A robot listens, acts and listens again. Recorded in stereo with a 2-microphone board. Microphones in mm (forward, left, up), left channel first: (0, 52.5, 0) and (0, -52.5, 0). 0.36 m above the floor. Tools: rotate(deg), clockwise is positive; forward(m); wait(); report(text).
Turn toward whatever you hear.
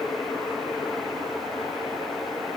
wait()
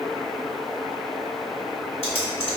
rotate(-65)
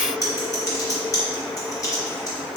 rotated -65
rotate(-40)
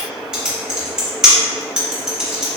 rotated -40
report("Facing the typing on a keyboard, under 1 m away.")